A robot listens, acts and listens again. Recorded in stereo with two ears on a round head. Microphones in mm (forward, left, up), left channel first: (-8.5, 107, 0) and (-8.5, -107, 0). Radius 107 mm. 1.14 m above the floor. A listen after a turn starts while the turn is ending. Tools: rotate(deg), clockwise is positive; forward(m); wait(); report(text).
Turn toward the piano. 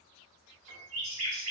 rotate(40)
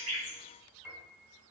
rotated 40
report("Found it: a piano, straight ahead.")